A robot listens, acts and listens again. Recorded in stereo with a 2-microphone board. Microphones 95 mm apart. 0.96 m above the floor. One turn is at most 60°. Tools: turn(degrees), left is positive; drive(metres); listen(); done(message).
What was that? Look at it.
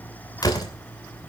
turn(degrees=45)
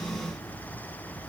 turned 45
listen()
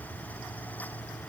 done("I heard a door slam, but can't make it out now. It was about straight ahead or 90° left.")